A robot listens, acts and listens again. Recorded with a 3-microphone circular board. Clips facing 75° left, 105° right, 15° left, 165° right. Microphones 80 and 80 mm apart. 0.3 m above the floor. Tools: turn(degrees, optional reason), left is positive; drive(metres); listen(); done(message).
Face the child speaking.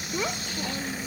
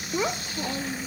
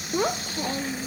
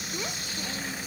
turn(degrees=-30, reason="The child speaking: 30° right.")
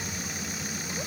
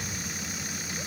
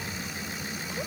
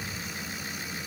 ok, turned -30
listen()
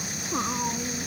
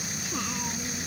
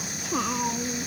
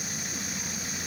turn(degrees=15, reason="The child speaking is now 15° left.")
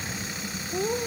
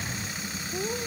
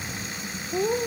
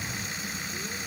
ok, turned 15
done("Facing the child speaking.")